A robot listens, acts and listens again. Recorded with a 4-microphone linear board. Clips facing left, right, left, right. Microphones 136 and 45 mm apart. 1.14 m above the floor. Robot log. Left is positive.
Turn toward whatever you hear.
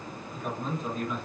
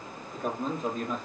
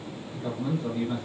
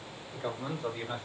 note: The man speaking: about 45° right or 135° right.
cmd yaw -45
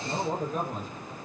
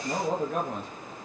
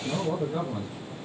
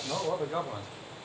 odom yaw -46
note: So it is at 110° right.
cmd yaw -110
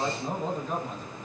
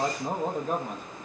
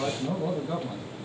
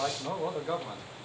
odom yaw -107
note: The man speaking is now 60° right.
cmd yaw -60
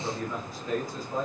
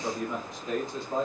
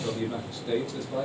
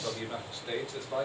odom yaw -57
note: The man speaking is now 25° right.
cmd yaw -25
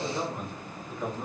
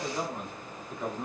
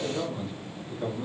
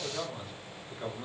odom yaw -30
end: Found it: a man speaking, straight ahead.